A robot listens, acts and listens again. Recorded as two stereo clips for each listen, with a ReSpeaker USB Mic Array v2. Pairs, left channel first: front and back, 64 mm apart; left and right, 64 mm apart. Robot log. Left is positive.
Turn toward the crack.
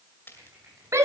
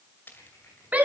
note: The crack: 45° left.
cmd yaw +45
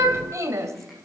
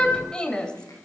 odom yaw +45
end: Facing where the crack came from. I can't hear it now.